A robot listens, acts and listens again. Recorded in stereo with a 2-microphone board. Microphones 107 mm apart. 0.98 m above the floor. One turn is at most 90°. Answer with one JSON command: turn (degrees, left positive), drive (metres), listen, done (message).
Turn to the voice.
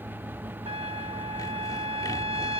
{"listen": true}
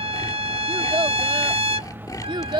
{"turn": -45}
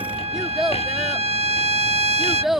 {"done": "Found it: a child speaking, straight ahead."}